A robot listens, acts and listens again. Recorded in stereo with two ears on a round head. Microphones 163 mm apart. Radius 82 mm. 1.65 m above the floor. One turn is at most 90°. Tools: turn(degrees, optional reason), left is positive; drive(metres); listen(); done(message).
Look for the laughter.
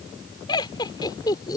turn(degrees=20, reason="The laughter: about 20° left or 160° left.")
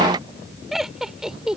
done("Facing the laughter.")